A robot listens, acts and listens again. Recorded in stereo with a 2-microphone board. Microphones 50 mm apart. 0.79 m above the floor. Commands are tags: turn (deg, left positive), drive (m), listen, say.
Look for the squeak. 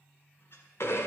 <turn deg="50"/>
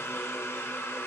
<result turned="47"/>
<listen/>
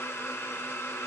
<listen/>
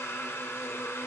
<say>I heard a squeak, but can't make it out now. It was about straight ahead or 85° left.</say>